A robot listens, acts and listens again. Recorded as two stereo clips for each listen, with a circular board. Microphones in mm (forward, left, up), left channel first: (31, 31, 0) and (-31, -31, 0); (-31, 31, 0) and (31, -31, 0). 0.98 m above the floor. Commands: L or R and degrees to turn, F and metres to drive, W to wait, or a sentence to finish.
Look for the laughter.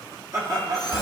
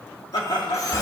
L170
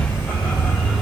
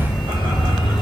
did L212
R40
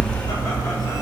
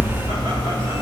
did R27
R15
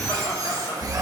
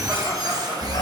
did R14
I heard laughter from this way, but can't make it out now.